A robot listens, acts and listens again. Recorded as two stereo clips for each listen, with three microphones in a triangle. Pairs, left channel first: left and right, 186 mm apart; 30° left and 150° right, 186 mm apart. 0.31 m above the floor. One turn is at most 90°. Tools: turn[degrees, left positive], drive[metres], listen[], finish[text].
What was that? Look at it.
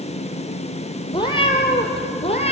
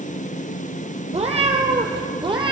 Thought: The cat meowing: 145° left.
Action: turn[90]
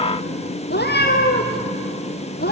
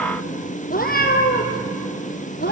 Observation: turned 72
Thought: The cat meowing is now 60° left.
Action: turn[60]
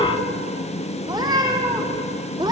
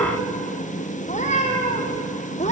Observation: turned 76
Thought: The cat meowing is now 25° right.
Action: turn[-25]
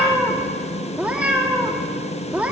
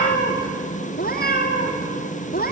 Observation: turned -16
Action: finish[Facing the cat meowing.]